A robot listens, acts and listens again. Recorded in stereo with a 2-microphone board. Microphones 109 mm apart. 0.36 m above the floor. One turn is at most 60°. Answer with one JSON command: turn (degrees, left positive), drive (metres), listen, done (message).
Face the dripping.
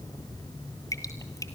{"turn": 35}
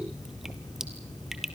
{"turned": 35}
{"done": "Found it: dripping, straight ahead, 1 to 2 m away."}